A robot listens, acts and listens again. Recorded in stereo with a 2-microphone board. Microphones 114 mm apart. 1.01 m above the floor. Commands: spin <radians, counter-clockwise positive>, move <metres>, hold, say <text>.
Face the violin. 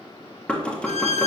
spin 1.57
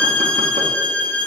spin 0.17
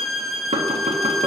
say Facing the violin, 1 to 2 m away.